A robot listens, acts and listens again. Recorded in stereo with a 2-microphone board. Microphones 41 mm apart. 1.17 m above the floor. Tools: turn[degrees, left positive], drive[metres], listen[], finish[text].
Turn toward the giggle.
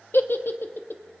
Thought: The giggle: about 65° left or 115° left.
Action: turn[65]
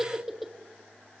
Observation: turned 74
Action: finish[Facing the giggle, 1 to 2 m away.]